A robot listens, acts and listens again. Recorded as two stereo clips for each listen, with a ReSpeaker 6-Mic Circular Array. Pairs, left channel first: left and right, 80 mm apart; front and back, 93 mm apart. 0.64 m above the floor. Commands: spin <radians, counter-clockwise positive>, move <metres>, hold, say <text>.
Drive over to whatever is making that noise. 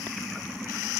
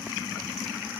hold
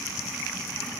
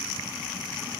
hold
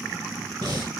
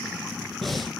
spin -1.57
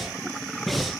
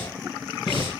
move 1.0
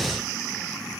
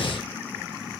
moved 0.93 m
move 1.0
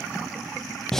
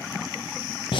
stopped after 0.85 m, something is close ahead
say I am next to the breathing.